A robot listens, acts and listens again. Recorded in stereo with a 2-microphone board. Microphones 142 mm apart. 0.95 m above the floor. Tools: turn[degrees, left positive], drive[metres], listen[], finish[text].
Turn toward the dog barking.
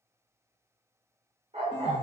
Thought: The dog barking: about 50° right or 130° right.
Action: turn[-50]
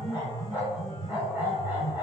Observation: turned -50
Thought: So it is at 15° right.
Action: turn[-15]
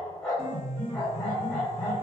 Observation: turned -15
Action: finish[Found it: a dog barking, straight ahead, under 1 m away.]